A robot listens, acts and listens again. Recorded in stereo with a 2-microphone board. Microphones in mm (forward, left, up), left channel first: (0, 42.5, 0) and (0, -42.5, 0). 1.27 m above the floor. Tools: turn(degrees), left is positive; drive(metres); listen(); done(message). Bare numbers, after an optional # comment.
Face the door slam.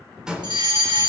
turn(-30)
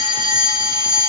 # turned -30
listen()
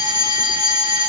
done("I heard a door slam, but can't make it out now. It was about 20° left or 140° right.")